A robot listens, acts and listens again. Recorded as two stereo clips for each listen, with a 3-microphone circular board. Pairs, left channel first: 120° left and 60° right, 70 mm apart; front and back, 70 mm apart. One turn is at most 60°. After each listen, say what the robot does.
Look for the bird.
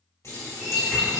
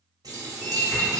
Turn 60° right.
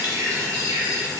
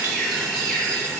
Turn 60° right.
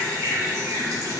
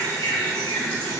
Turn 20° right.
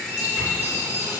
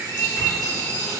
Found it: a bird, straight ahead.